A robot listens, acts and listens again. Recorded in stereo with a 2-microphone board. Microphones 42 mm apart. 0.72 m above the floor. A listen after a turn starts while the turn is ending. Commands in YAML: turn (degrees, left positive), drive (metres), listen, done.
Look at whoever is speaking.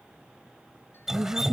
turn: -70
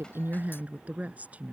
turn: -35
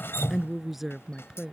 done: "Facing the woman speaking."